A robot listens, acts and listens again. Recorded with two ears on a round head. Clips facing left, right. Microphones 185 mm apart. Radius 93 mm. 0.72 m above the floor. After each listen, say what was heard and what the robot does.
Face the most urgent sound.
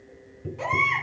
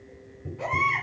The baby crying: about 65° left or 115° left. Turn 65° left.
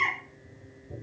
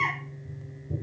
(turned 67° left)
So it is at 50° left. Turn 50° left.
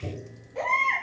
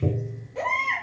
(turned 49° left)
Facing the baby crying, over 4 m away.